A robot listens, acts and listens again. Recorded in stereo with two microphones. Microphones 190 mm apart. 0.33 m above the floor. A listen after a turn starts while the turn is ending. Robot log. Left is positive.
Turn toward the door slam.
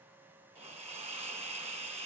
cmd idle
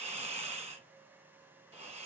cmd idle
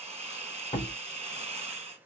note: The door slam: about 35° left or 145° left.
cmd yaw +35
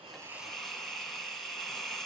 cmd idle
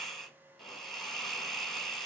end: I heard a door slam, but can't make it out now. It was about straight ahead or 110° left.